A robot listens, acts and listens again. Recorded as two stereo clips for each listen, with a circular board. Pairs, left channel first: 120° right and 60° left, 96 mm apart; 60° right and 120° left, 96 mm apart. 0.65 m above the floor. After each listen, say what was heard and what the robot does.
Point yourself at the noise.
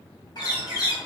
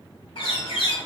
The bird: 80° right. Turn 80° right.
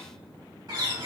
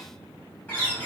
The bird is now 15° left. Turn 15° left.
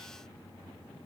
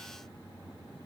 Keep listening.
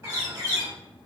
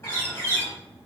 Found it: a bird, straight ahead, 1 to 2 m away.